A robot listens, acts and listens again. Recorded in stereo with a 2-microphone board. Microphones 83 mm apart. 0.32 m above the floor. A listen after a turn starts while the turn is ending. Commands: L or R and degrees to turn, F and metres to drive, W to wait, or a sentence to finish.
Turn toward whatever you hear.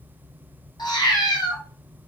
L65
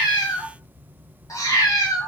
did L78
L50
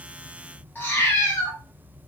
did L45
L30
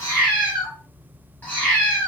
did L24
L20
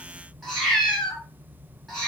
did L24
Facing the cat meowing.